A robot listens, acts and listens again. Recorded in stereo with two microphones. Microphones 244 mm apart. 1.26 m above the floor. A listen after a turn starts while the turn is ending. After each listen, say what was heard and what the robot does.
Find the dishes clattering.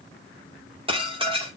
The dishes clattering: about 20° right or 160° right. Turn 20° right.
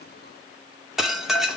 Found it: dishes clattering, straight ahead.